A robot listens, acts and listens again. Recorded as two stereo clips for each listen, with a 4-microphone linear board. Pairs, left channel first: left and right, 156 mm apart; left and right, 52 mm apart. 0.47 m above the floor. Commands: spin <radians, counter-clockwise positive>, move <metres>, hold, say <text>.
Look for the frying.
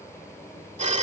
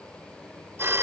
hold
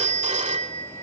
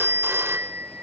hold
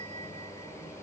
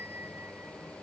say I can't make out frying, only a phone ringing.